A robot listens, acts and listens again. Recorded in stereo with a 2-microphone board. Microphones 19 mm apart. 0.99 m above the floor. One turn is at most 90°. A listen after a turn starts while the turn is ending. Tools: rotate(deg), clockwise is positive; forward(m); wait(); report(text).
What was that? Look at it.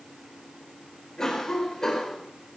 rotate(-30)
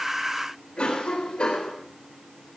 rotate(-90)
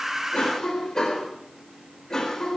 rotate(-25)
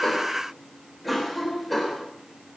report("Found it: a cough, straight ahead.")